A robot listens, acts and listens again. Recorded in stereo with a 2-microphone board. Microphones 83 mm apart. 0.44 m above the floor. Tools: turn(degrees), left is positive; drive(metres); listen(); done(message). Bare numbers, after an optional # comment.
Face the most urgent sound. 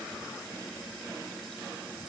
listen()
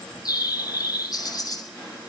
listen()
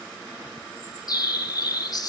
done("I can't make out anything urgent to turn to.")